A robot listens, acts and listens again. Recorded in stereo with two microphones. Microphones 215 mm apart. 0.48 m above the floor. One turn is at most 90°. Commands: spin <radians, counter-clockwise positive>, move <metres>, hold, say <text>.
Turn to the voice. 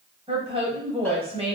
spin -0.44
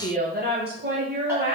spin -1.57
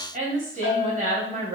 spin -0.70
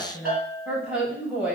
say Found it: a woman speaking, straight ahead, 2 to 4 m away.